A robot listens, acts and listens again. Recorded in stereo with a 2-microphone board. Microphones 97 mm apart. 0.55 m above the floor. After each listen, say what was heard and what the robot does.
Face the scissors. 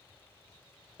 Keep listening.
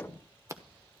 The scissors: about 30° right or 150° right. Turn 30° right.
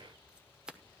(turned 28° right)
So it is at 10° right. Turn 10° right.
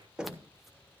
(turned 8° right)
Keep listening.
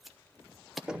Facing the scissors, under 1 m away.